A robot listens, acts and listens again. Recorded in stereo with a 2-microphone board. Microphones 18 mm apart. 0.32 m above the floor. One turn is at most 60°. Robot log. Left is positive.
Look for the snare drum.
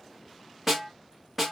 cmd yaw -30
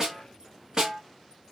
note: So it is at 140° right.
cmd yaw -60
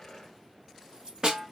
note: The snare drum is now 110° right.
cmd yaw -60
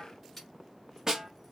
note: The snare drum is now 35° right.
cmd yaw -35
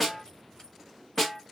end: Facing the snare drum.